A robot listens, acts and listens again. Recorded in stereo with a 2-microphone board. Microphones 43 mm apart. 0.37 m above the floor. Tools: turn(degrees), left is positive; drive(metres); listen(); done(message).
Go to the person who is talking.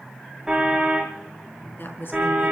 turn(degrees=55)
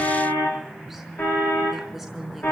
drive(metres=1.0)
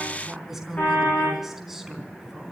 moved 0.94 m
turn(degrees=-10)
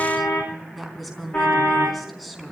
drive(metres=1.0)
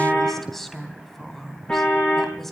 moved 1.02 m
drive(metres=1.0)
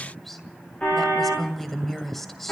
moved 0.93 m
drive(metres=1.0)
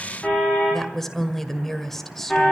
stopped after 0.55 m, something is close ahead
turn(degrees=10)
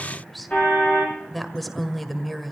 done("I am next to the woman speaking.")